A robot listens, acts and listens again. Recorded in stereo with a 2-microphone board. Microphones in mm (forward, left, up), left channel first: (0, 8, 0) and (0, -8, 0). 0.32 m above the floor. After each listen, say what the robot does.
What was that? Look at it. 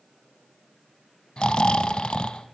Turn 65° left.
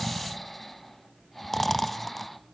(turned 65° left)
Facing the snoring.